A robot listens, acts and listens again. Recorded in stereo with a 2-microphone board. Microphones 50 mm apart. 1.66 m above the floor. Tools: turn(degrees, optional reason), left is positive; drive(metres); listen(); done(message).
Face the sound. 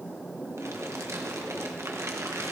turn(degrees=-90)
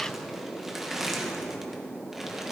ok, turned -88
done("Found it: crumpling, straight ahead.")